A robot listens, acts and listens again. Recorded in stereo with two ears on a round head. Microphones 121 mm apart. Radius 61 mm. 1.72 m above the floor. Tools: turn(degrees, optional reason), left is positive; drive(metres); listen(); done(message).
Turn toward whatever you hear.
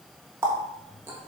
turn(degrees=-20, reason="The running tap: about 20° right or 160° right.")
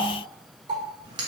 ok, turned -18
turn(degrees=-150, reason="So it is at 150° right.")
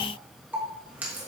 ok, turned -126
turn(degrees=-15, reason="The running tap is now 15° right.")
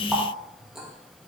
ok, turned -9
done("Found it: a running tap, straight ahead.")